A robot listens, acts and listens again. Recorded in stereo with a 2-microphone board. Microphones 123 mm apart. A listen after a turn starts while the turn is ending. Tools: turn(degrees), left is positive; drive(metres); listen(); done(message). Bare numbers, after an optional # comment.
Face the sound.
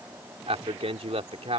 # The man speaking: about 60° right or 120° right.
turn(-60)
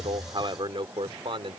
# So it is at 55° right.
turn(-55)
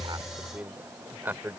# The man speaking is now 20° right.
turn(-20)
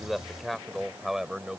done("Found it: a man speaking, straight ahead.")